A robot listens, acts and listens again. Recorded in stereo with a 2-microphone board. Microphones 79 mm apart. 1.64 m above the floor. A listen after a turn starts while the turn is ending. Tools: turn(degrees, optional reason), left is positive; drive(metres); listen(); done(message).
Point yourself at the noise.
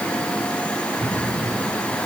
turn(degrees=-45, reason="The cupboard door: about 45° right or 135° right.")
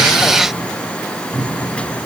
done("Found it: a cupboard door, straight ahead.")